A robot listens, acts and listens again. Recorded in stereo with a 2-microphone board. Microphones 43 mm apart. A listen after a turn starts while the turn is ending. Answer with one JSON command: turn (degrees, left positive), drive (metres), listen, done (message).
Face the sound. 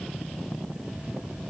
{"listen": true}
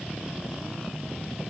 {"listen": true}
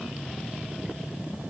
{"done": "I can't make out anything to turn to."}